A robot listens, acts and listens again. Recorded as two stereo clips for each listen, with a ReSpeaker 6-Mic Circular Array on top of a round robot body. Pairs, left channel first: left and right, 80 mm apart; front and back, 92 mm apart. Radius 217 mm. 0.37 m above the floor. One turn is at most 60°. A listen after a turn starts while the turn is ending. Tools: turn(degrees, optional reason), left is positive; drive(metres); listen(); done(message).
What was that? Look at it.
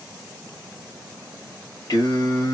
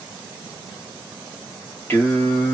turn(degrees=60, reason="The singing: 65° left.")
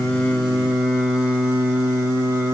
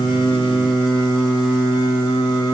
turn(degrees=-40, reason="The singing is now 40° right.")
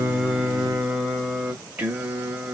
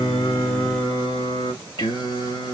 turn(degrees=-20, reason="The singing is now 20° right.")
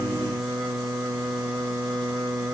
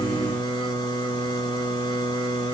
done("Facing the singing.")